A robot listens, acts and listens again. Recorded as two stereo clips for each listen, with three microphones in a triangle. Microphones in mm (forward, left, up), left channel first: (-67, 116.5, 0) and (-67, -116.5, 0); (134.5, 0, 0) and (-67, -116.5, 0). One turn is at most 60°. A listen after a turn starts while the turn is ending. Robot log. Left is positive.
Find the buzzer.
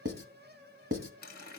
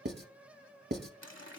cmd idle
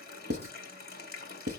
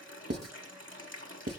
cmd idle
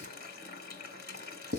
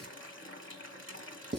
end: I can't make out a buzzer to turn to.